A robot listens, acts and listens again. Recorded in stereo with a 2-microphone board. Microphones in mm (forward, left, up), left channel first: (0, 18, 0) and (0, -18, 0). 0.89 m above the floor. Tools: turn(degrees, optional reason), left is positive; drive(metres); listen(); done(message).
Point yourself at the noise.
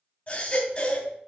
turn(degrees=40, reason="The baby crying: about 40° left or 140° left.")
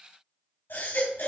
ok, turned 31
turn(degrees=110, reason="So it is at 110° left.")
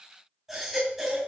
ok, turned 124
turn(degrees=-10, reason="The baby crying is now 10° right.")
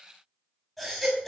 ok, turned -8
done("Found it: a baby crying, straight ahead.")